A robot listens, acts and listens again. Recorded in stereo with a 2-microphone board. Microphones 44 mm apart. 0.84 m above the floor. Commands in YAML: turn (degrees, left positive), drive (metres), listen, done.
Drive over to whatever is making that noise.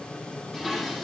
turn: 30
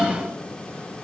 turn: -25
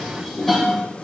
turn: 10
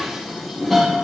drive: 1.0
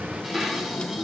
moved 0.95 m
drive: 1.0
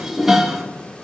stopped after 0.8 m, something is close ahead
turn: -10
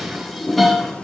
done: "I am next to the dishes clattering."